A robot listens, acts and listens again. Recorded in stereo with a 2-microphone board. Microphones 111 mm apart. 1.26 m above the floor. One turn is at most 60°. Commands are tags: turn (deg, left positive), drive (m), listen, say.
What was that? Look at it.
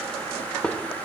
<turn deg="30"/>
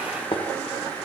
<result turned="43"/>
<turn deg="60"/>
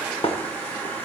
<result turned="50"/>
<turn deg="60"/>
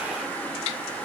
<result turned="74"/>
<listen/>
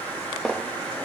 <say>Facing the dishes clattering.</say>